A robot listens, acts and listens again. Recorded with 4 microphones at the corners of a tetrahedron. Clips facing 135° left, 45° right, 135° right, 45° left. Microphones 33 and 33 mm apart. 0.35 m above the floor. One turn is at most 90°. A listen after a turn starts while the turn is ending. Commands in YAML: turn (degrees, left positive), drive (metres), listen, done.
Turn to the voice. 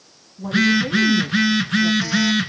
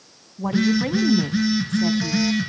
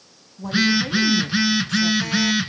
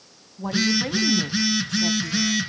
turn: -30
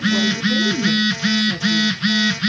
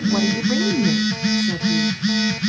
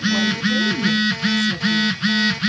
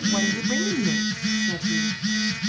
turn: -25
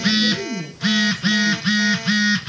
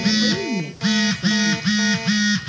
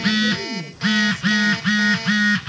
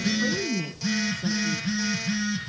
turn: -15
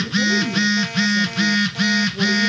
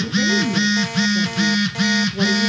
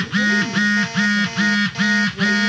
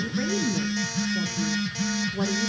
turn: -10
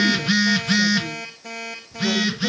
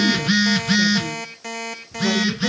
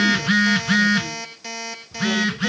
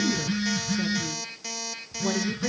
listen: true
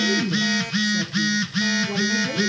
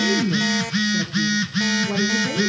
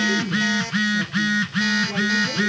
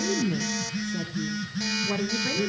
done: "Found it: a woman speaking, straight ahead."